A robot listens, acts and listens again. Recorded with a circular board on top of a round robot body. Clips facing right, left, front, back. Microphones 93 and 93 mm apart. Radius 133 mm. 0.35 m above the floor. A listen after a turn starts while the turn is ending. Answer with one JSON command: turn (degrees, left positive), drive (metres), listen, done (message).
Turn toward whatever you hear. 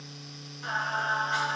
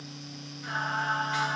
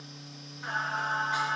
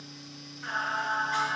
{"turn": -75}
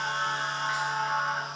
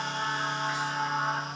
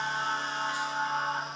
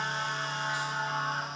{"done": "Found it: singing, straight ahead."}